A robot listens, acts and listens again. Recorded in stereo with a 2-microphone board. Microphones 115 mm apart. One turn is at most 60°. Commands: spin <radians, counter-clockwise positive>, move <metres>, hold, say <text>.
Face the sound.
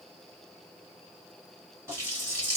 spin -0.35
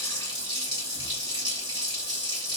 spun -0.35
spin -1.05
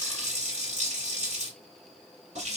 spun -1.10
spin -1.05
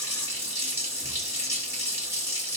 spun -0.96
spin -0.35
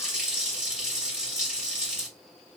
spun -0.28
say Facing the running tap, 1 to 2 m away.